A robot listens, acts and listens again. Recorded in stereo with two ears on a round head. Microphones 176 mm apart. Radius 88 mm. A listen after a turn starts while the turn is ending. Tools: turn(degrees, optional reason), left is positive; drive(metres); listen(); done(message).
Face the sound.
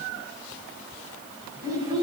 turn(degrees=-20, reason="The child speaking: about 20° right or 160° right.")
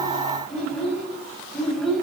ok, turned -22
done("Found it: a child speaking, straight ahead, over 4 m away.")